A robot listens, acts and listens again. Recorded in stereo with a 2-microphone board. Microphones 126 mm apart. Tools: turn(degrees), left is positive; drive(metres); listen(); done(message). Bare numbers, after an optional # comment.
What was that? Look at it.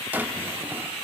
turn(-30)
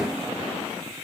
listen()
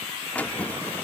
# So it is at 15° left.
turn(15)
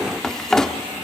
done("Facing the drawer.")